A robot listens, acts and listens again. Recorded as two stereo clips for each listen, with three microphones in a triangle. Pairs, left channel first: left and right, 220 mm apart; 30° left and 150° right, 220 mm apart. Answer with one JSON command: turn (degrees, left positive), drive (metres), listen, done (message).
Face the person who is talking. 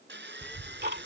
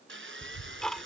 {"done": "Found it: a child speaking, straight ahead."}